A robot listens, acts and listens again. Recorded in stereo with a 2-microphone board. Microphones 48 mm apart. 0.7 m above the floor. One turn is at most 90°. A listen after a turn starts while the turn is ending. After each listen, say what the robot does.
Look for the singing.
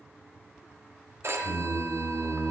Turn 30° left.
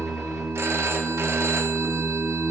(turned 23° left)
Turn 35° right.
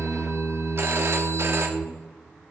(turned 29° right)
Turn 15° right.
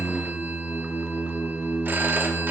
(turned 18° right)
Found it: singing, straight ahead, 2 to 4 m away.